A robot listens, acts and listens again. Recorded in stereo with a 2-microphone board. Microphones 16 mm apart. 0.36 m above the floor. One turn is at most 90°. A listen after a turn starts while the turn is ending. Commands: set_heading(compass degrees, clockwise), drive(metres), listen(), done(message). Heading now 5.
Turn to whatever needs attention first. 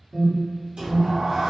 set_heading(335)
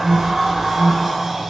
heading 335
set_heading(245)
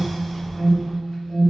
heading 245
set_heading(195)
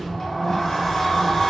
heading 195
listen()
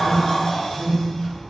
done("Found it: an alarm, straight ahead.")